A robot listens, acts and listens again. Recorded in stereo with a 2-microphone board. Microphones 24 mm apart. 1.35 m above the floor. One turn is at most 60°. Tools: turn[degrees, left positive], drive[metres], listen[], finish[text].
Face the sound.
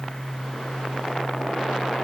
Action: listen[]
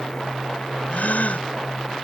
Action: turn[60]
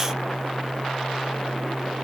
Thought: Nothing new. It was at 30° left.
Action: turn[30]
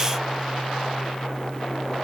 Action: finish[Facing where the gasp came from. I can't hear it now.]